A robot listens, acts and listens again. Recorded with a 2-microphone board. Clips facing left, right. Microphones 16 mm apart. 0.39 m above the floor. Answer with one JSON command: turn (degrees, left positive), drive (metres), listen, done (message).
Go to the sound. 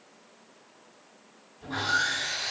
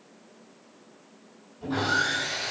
{"turn": -30}
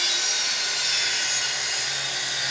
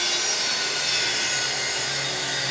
{"turn": 15}
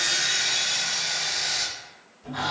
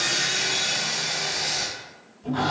{"drive": 1.0}
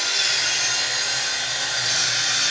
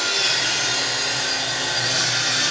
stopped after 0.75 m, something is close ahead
{"done": "Arrived at the sawing, straight ahead."}